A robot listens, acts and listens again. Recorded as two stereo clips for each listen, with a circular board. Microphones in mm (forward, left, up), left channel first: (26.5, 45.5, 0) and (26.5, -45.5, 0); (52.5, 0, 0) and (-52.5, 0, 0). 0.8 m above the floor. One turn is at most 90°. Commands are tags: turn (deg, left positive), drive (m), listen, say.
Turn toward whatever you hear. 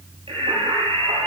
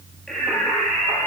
<turn deg="-90"/>
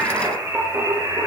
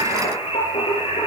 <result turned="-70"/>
<turn deg="-30"/>
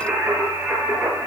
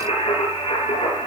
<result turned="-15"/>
<turn deg="-25"/>
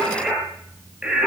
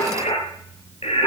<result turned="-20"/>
<turn deg="-10"/>
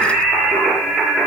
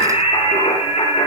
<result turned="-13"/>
<say>Found it: singing, straight ahead, over 4 m away.</say>